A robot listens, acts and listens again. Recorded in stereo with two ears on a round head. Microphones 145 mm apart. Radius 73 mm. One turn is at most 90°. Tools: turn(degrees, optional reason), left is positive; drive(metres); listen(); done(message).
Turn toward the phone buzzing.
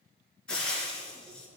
listen()
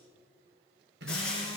turn(degrees=-75, reason="The phone buzzing: about 75° right or 105° right.")
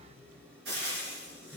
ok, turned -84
turn(degrees=-10, reason="So it is at 10° right.")
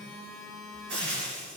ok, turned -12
done("Found it: a phone buzzing, straight ahead, 1 to 2 m away.")